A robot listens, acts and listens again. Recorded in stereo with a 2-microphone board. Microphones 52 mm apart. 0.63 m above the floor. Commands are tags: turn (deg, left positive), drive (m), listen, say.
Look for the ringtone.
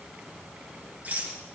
<listen/>
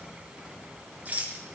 <listen/>
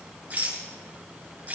<say>I can't make out a ringtone to turn to.</say>